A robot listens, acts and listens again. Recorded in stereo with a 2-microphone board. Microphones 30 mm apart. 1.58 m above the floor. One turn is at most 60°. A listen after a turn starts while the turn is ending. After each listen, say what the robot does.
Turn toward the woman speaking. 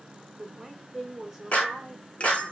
Turn 30° left.
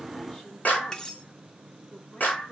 Keep listening.
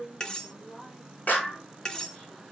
Turn 60° left.
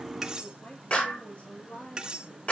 Turn 60° left.
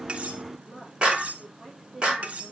Turn 10° right.
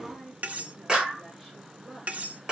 Found it: a woman speaking, straight ahead.